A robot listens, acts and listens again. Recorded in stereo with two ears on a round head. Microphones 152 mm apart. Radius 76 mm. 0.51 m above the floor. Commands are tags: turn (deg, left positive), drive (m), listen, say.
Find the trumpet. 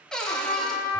<turn deg="25"/>
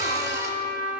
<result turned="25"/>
<turn deg="130"/>
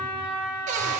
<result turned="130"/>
<turn deg="20"/>
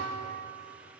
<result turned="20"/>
<listen/>
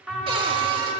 <say>Facing the trumpet, 1 to 2 m away.</say>